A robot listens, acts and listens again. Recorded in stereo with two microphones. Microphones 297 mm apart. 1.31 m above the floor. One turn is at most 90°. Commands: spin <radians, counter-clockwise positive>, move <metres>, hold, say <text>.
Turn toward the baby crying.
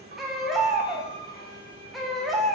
spin 0.52
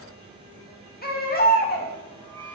spin 1.57
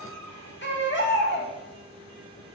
spin 0.70
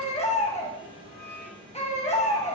spin 0.35
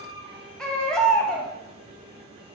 say Facing the baby crying, 1 to 2 m away.